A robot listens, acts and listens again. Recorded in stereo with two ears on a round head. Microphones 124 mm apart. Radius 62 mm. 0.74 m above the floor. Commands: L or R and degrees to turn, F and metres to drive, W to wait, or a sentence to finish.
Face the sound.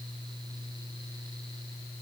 W
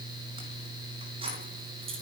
R45
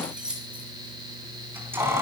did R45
R20
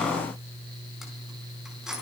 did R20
Facing the keys jangling, over 4 m away.